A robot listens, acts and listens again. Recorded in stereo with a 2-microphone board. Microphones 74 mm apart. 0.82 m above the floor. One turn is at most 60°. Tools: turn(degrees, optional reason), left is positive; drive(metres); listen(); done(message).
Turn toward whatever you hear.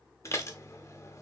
turn(degrees=40, reason="The dishes clattering: about 40° left or 140° left.")
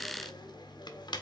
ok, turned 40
turn(degrees=60, reason="So it is at 100° left.")
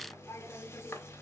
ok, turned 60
turn(degrees=35, reason="The dishes clattering is now 35° left.")
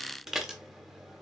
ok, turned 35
done("Facing the dishes clattering.")